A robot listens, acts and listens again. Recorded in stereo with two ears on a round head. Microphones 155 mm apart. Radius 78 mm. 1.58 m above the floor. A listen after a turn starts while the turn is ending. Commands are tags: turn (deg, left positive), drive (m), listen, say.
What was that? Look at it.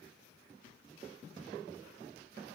<listen/>
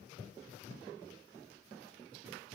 <listen/>
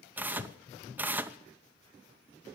<turn deg="-30"/>
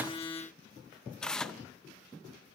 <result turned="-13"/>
<say>Facing the tearing paper, under 1 m away.</say>